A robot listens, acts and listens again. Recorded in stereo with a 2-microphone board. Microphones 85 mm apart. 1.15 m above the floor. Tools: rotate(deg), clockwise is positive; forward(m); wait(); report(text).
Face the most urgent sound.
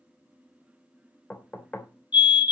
rotate(-65)
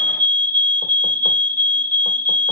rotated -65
rotate(-20)
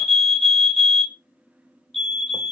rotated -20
report("Facing the fire alarm, 2 to 4 m away.")